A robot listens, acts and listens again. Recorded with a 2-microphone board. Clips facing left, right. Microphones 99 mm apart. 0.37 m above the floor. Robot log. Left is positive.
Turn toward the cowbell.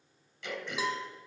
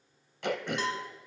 cmd yaw +30
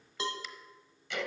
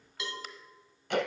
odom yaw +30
note: So it is at 145° left.
cmd yaw +145
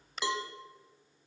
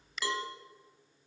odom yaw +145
note: The cowbell is now 25° left.
cmd yaw +25
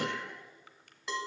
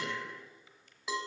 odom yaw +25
end: Facing the cowbell, 1 to 2 m away.